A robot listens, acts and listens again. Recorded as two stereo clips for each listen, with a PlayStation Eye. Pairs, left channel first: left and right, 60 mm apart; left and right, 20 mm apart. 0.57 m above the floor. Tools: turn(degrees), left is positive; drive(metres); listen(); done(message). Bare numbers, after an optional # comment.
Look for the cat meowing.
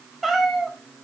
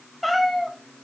turn(30)
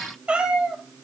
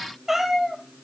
# So it is at 15° right.
turn(-15)
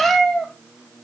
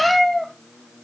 # The cat meowing is now 10° left.
turn(10)
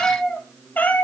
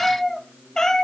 # The cat meowing is now 35° left.
turn(35)
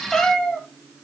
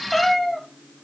# The cat meowing is now 15° left.
turn(15)
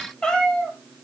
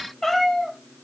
# The cat meowing is now 15° left.
turn(15)
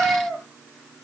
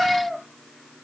# The cat meowing is now 10° left.
turn(10)
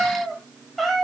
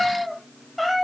done("Facing the cat meowing, 1 to 2 m away.")